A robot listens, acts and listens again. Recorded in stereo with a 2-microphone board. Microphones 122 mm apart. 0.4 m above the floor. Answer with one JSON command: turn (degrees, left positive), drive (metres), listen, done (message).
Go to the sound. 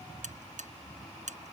{"turn": -90}
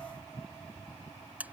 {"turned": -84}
{"turn": -15}
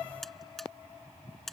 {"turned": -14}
{"drive": 1.0}
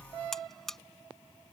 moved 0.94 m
{"drive": 1.0}
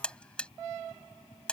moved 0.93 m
{"turn": 10}
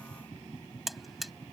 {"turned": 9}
{"drive": 1.0}
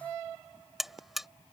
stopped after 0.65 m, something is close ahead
{"done": "I am next to the buzzer."}